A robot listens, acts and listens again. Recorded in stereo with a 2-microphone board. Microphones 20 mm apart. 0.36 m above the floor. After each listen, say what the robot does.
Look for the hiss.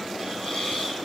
Turn 60° left.
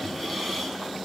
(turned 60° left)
Keep listening.
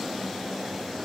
Keep listening.
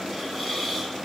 Found it: a hiss, straight ahead, over 4 m away.